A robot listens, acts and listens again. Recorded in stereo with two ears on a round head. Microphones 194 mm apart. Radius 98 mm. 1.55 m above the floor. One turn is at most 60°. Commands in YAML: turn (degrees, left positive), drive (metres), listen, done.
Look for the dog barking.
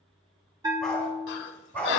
turn: 30
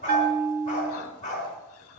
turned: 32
turn: 60
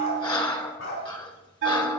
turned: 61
turn: 60
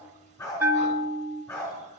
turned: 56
turn: 20
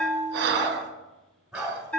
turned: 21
done: "Found it: a dog barking, straight ahead, over 4 m away."